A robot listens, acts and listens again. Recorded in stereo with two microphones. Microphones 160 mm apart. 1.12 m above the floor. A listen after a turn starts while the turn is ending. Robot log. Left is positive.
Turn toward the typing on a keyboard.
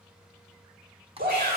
note: The typing on a keyboard: about 35° right or 145° right.
cmd yaw -35
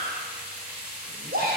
cmd idle
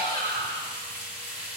cmd idle
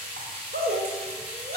end: I heard typing on a keyboard, but can't make it out now. It was about straight ahead or 110° right.